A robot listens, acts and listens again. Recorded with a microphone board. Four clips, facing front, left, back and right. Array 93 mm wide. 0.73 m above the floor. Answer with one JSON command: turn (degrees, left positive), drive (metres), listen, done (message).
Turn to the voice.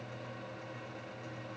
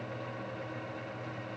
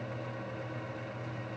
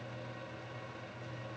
{"listen": true}
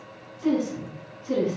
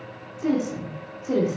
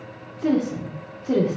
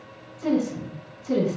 {"turn": 155}
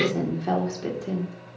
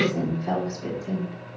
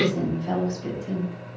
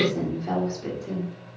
{"done": "Found it: a woman speaking, straight ahead."}